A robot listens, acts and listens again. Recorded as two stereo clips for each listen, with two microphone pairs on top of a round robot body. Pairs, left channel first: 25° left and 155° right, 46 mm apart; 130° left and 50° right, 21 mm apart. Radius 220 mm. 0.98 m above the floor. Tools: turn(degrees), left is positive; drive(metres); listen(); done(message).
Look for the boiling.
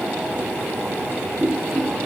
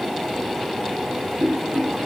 turn(degrees=-60)
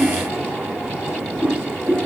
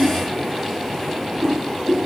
turn(degrees=-10)
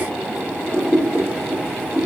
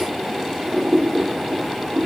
done("Facing the boiling.")